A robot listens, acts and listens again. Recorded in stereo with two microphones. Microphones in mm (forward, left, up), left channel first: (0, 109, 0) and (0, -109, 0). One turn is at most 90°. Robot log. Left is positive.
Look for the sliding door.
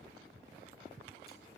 cmd idle
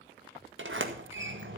note: The sliding door: about 65° right or 115° right.
cmd yaw -65
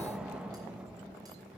end: Facing the sliding door, 1 to 2 m away.